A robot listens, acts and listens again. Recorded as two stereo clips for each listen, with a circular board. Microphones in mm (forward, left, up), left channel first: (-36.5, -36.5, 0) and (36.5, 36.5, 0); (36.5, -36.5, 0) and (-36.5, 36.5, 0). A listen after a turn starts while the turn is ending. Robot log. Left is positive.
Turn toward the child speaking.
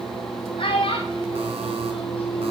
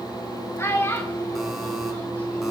note: The child speaking: 110° right.
cmd yaw -110
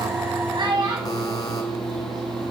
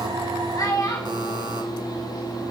end: Facing the child speaking.